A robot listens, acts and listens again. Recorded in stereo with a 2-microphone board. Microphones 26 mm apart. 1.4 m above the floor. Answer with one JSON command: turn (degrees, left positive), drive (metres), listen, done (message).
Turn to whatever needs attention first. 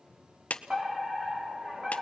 {"turn": -35}
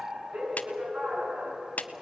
{"turn": -110}
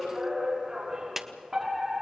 {"turn": -20}
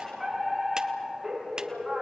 {"done": "Facing the fire alarm, over 4 m away."}